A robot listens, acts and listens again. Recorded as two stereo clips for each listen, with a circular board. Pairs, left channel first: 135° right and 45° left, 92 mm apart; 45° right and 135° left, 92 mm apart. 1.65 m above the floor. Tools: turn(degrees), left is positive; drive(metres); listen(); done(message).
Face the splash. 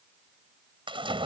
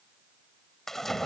turn(degrees=40)
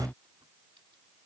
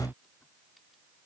done("I heard a splash from this way, but can't make it out now.")